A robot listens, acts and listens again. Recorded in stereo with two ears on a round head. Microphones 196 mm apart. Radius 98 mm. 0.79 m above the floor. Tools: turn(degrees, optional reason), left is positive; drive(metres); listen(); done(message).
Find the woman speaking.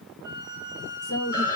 turn(degrees=55, reason="The woman speaking: about 55° left or 125° left.")
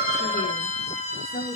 turn(degrees=40, reason="So it is at 40° left.")
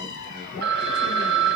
listen()
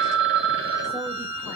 listen()
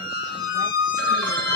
done("Facing where the woman speaking came from. I can't hear it now.")